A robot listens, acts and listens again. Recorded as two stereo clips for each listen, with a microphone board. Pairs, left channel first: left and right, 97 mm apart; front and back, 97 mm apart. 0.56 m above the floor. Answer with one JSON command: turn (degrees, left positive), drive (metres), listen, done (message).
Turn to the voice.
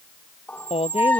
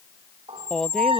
{"turn": 85}
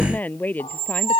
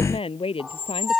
{"turn": 15}
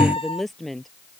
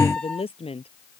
{"done": "Found it: a woman speaking, straight ahead."}